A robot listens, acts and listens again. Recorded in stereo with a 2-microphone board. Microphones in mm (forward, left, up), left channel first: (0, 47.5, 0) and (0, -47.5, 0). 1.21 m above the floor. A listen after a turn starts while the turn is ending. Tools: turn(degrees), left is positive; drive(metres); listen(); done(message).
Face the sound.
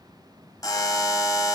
turn(degrees=35)
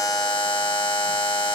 turn(degrees=100)
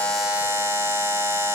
turn(degrees=-25)
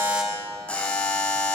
turn(degrees=15)
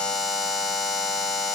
done("Facing the buzzer.")